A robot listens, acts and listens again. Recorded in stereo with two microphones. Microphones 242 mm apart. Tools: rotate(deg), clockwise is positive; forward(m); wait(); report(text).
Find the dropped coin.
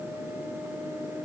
wait()
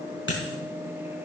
rotate(-55)
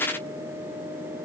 wait()
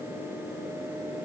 report("I heard a dropped coin, but can't make it out now. It was about straight ahead or 70° left.")